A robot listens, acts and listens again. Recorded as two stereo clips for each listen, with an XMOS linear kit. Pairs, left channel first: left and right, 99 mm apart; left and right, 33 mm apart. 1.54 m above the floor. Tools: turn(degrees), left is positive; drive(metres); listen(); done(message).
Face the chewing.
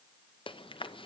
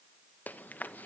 turn(degrees=65)
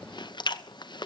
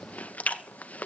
turn(degrees=50)
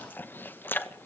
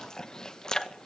turn(degrees=20)
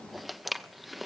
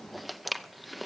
done("Facing the chewing, under 1 m away.")